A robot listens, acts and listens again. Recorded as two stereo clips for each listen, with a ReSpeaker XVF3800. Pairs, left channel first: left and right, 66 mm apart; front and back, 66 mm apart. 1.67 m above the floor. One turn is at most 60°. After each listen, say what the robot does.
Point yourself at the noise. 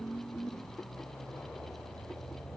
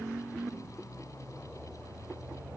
Keep listening.
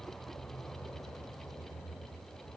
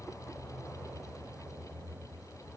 Keep listening.
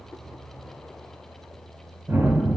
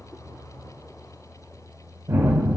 Turn 60° right.
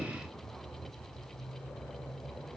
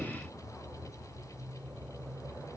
Turn 60° right.
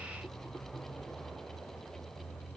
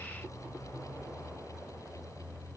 Turn 15° right.
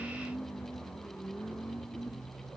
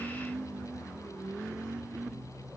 I heard a gunshot from this way, but can't make it out now.